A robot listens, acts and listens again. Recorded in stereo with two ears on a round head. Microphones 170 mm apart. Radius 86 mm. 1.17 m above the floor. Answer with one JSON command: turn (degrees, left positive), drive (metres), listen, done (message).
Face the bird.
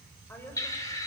{"turn": 20}
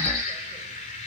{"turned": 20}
{"turn": 140}
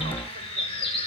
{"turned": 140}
{"turn": 30}
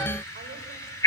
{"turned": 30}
{"turn": 15}
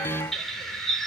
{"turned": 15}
{"done": "Found it: a bird, straight ahead, 2 to 4 m away."}